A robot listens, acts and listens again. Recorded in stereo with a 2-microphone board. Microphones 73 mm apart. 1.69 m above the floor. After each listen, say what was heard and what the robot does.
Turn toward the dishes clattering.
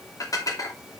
The dishes clattering: about 55° left or 125° left. Turn 55° left.
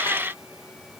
Keep listening.
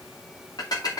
So it is at 65° left. Turn 65° left.
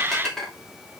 Found it: dishes clattering, straight ahead.